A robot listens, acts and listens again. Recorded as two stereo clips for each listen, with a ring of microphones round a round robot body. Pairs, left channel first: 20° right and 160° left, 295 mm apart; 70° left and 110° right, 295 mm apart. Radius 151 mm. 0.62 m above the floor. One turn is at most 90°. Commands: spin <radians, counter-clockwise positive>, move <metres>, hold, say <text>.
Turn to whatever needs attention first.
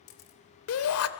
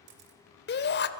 spin 0.26
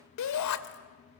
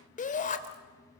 say Facing the shout, 2 to 4 m away.